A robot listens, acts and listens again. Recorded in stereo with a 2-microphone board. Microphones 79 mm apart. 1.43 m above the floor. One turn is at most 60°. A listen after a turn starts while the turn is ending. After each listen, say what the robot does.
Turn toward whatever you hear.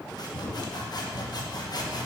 Turn 55° left.
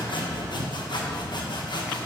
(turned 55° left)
Turn 60° left.
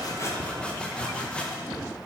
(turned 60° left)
Turn 10° left.
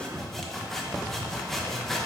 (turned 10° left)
Facing the sawing, 1 to 2 m away.